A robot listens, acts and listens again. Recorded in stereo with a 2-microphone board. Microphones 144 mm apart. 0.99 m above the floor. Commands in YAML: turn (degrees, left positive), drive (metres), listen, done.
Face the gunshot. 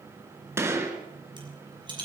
turn: -20
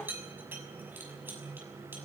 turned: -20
listen: true
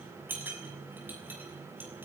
done: "I heard a gunshot, but can't make it out now. It was about straight ahead or 140° right."